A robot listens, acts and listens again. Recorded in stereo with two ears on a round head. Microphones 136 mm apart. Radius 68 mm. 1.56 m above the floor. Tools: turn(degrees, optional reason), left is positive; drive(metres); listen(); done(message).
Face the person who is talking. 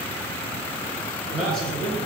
turn(degrees=30)
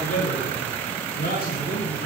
turn(degrees=110, reason="So it is at 110° left.")
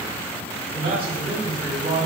turn(degrees=-40, reason="The man speaking is now 40° right.")
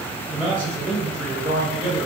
done("Facing the man speaking.")